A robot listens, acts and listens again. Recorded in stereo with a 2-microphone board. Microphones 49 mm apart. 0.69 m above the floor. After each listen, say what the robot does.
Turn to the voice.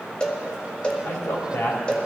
Turn 75° left.
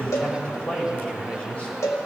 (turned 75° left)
Turn 25° left.
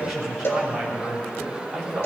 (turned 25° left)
Facing the man speaking.